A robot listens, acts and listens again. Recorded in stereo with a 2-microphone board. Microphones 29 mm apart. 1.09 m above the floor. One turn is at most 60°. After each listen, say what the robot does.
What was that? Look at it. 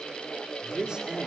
Turn 30° right.
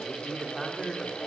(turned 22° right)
Facing the man speaking.